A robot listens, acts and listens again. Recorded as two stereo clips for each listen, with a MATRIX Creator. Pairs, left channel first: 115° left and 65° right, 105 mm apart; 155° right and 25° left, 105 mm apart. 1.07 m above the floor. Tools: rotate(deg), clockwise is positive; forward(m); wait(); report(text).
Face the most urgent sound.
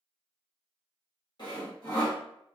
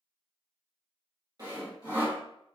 wait()
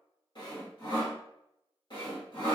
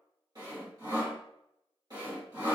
wait()
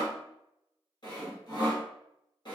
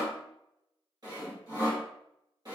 report("I can't make out anything urgent, only sawing.")